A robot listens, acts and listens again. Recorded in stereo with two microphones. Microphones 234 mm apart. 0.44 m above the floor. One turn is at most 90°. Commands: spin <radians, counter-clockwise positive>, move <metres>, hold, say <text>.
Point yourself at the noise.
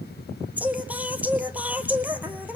spin -0.52
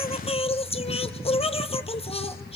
spin 0.44
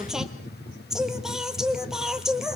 say Found it: singing, straight ahead, 2 to 4 m away.